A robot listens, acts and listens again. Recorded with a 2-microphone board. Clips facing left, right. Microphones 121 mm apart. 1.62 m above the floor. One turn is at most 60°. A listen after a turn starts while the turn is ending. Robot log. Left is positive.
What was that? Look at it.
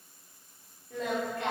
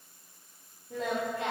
note: The singing: about 25° right or 155° right.
cmd yaw -25
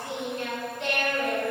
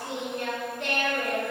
note: So it is at 120° right.
cmd yaw -60
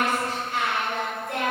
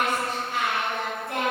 note: The singing is now 75° right.
cmd yaw -60
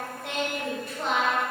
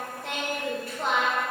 end: Found it: singing, straight ahead.